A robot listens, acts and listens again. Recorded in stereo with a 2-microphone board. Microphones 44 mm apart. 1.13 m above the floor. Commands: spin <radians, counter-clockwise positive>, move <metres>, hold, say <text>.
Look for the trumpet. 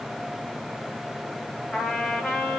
spin 0.26
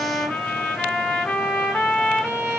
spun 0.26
spin 2.62
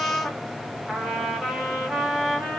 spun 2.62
say Found it: a trumpet, straight ahead.